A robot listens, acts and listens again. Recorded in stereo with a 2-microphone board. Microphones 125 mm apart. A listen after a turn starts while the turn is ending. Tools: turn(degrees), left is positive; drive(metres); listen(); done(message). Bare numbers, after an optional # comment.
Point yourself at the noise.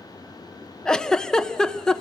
turn(30)
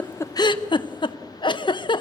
# So it is at 140° left.
turn(140)
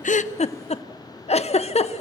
# The giggle is now 60° left.
turn(60)
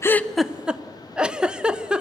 done("Facing the giggle.")